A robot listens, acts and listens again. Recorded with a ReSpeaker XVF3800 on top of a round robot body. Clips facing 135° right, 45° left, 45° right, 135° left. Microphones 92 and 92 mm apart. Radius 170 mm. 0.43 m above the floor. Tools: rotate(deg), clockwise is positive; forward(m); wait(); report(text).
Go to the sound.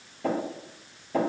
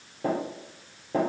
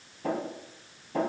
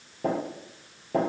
rotate(-105)
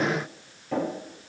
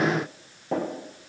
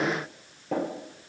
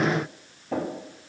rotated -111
forward(1.0)
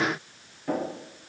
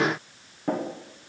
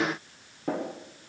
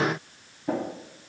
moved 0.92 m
rotate(10)
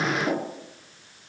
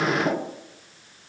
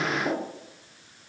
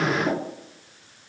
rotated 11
forward(1.0)
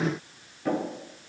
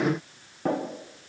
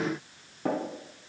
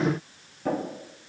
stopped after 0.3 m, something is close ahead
report("Arrived at the tapping, straight ahead.")